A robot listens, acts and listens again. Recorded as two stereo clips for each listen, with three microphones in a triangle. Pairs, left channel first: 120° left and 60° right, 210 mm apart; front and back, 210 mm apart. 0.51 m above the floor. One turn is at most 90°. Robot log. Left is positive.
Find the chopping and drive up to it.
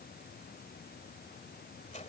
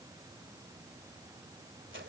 cmd idle
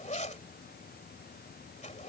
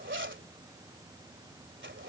cmd idle
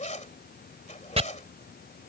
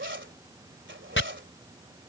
cmd fwd 1.0
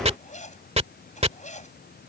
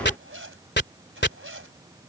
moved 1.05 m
cmd fwd 1.0
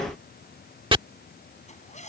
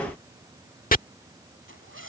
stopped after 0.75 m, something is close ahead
note: The chopping is now 10° right.
cmd yaw -10
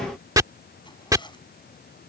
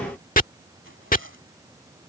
end: Arrived at the chopping, straight ahead.